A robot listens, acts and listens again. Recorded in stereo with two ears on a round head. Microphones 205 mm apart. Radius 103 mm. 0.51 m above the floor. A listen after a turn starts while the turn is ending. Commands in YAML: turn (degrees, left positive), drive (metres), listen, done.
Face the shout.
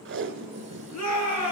turn: 90
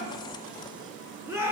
turn: -10
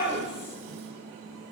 done: "Found it: a shout, straight ahead."